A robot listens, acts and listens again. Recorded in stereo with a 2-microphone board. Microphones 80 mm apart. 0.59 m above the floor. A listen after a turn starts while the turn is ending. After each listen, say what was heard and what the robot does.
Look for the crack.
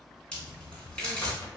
Turn 30° left.
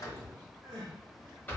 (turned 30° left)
Keep listening.
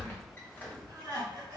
I heard a crack, but can't make it out now. It was about 20° right or 140° left.